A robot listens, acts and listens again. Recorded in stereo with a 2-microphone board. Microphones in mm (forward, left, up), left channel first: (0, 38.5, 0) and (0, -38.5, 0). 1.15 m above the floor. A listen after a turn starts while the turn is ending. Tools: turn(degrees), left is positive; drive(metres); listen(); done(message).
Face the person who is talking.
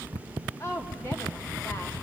turn(degrees=35)
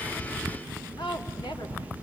turn(degrees=110)
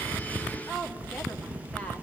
turn(degrees=20)
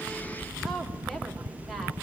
listen()
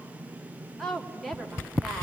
done("Found it: a woman speaking, straight ahead.")